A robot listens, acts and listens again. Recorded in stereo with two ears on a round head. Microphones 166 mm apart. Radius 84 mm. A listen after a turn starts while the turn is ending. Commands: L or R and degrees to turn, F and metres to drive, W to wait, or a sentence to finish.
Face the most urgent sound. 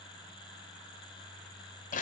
W
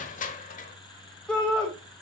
L30
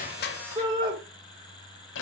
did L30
R25
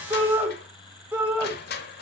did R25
R10
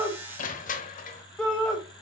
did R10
Found it: a shout, straight ahead, 2 to 4 m away.